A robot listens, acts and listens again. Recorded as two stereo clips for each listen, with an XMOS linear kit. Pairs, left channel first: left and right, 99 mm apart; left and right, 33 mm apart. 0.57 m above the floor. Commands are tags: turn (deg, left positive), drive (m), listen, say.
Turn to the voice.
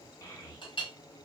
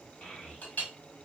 <turn deg="30"/>
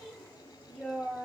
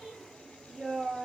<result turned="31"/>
<turn deg="10"/>
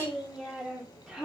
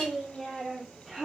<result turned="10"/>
<say>Found it: a child speaking, straight ahead.</say>